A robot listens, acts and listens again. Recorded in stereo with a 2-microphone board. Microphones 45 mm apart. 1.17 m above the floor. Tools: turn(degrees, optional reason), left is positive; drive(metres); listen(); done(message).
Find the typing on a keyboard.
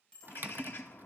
turn(degrees=-45, reason="The typing on a keyboard: about 45° right or 135° right.")
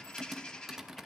turn(degrees=-10, reason="So it is at 10° right.")
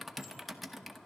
done("Found it: typing on a keyboard, straight ahead, under 1 m away.")